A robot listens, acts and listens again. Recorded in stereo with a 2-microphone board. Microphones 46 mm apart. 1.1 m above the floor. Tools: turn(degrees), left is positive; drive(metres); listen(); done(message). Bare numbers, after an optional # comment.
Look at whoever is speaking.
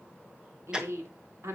turn(-90)
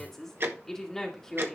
# So it is at 10° left.
turn(10)
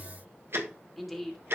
done("Facing the woman speaking, 2 to 4 m away.")